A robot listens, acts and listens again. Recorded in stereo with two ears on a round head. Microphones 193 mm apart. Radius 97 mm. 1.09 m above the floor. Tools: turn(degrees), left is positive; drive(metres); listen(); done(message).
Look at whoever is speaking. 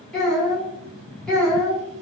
turn(degrees=30)
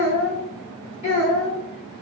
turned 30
turn(degrees=145)
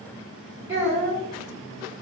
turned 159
turn(degrees=-15)
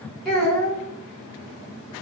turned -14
done("Found it: a child speaking, straight ahead.")